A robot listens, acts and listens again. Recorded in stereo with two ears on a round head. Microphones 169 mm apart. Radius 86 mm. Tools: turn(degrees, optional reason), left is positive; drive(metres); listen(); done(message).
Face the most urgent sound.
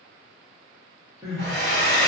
turn(degrees=-15, reason="The crying: about 15° right or 165° right.")
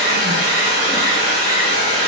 listen()
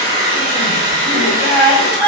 turn(degrees=-150, reason="So it is at 150° right.")
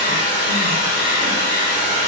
listen()
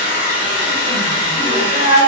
turn(degrees=-30, reason="The crying is now 30° right.")
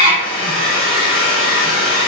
turn(degrees=-10, reason="The crying is now 10° right.")
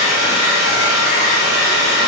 listen()
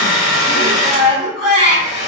done("Found it: crying, straight ahead.")